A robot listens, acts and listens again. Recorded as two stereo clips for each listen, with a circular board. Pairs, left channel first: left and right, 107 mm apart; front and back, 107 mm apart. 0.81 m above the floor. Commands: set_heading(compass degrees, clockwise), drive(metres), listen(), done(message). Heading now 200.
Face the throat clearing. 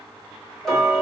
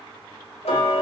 listen()
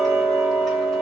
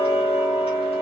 listen()
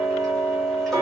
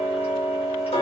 done("I can't make out throat clearing to turn to.")